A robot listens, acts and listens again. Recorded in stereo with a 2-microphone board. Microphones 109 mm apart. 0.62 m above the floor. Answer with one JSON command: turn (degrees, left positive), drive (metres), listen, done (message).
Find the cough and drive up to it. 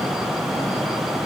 {"listen": true}
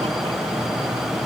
{"listen": true}
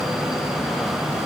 {"done": "I can't make out a cough."}